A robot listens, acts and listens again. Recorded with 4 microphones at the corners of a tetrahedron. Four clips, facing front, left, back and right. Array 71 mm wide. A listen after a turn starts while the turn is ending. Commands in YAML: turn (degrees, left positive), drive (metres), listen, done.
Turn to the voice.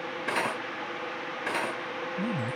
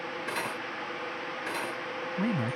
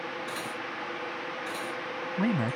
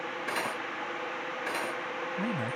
turn: 170
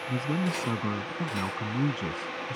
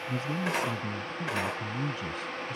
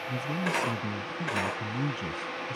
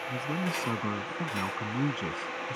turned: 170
turn: -50
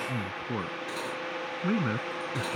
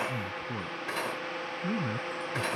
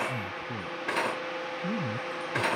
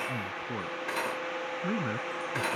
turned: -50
turn: -15
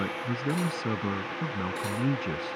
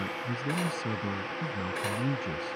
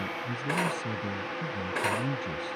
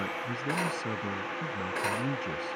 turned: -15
done: "Facing the man speaking."